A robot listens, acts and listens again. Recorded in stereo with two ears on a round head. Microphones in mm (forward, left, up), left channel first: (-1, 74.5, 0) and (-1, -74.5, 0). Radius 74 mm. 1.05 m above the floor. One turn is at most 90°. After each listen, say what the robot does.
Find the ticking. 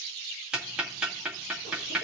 Turn 30° right.
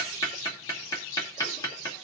Turn 25° left.
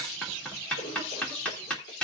Found it: ticking, straight ahead.